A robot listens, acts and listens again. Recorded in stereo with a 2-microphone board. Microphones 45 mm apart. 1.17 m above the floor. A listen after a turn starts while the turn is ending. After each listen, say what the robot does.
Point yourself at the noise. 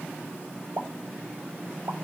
Turn 70° right.
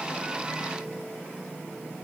Keep listening.
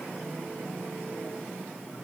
I heard a pop, but can't make it out now. It was about straight ahead or 40° right.